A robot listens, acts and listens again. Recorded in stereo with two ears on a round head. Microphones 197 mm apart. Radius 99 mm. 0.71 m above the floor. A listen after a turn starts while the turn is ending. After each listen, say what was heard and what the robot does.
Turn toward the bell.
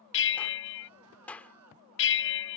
The bell: about 55° left or 125° left. Turn 55° left.
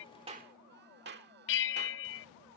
So it is at 60° left. Turn 60° left.
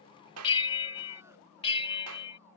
The bell is now 25° left. Turn 25° left.
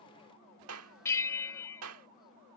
The bell is now 15° left. Turn 15° left.
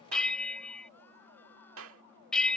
Facing the bell.